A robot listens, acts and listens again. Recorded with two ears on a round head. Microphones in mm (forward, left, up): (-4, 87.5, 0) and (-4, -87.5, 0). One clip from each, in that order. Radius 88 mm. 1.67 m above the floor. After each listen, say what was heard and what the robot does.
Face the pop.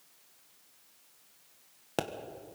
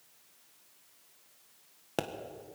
Turn 30° left.
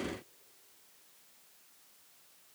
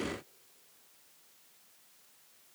Keep listening.
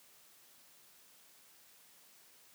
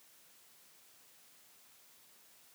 I heard a pop, but can't make it out now. It was about 25° right or 145° left.